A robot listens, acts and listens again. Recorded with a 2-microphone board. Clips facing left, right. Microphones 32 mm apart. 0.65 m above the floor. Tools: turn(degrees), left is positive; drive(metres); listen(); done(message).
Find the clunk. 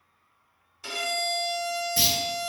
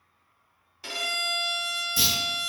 turn(degrees=30)
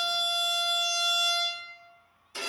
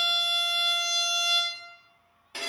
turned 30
listen()
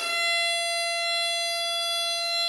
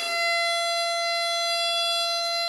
done("I heard a clunk, but can't make it out now. It was about straight ahead or 120° left.")